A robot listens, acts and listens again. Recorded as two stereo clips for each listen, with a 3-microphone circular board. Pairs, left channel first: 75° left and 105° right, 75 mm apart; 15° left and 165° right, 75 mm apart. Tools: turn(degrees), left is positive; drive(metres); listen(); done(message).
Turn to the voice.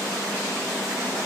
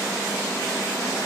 listen()
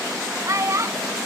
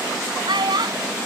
turn(degrees=-150)
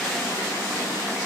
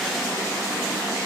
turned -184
turn(degrees=30)
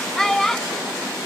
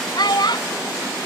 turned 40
turn(degrees=-10)
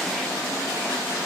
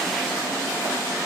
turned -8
listen()
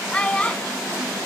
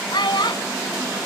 done("Found it: a child speaking, straight ahead.")